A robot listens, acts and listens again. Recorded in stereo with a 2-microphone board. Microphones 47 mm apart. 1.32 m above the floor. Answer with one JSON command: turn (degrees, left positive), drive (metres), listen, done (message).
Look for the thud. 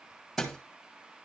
{"turn": 30}
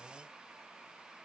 {"listen": true}
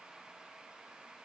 {"done": "I heard a thud, but can't make it out now. It was about 30° right or 150° left."}